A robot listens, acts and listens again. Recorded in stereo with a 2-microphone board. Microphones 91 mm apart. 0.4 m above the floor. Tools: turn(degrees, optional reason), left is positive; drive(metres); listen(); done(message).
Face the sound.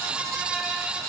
listen()
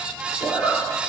turn(degrees=40, reason="The zipper: about 40° left or 140° left.")
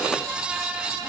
listen()
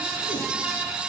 listen()
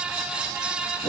done("I heard a zipper, but can't make it out now. It was about straight ahead or 100° left.")